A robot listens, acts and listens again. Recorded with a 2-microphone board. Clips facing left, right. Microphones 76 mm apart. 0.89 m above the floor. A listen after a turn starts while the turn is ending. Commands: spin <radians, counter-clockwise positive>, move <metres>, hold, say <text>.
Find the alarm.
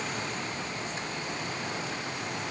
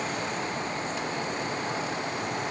hold
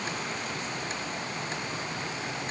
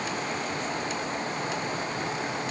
hold
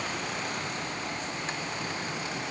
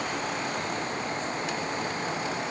say I can't make out an alarm.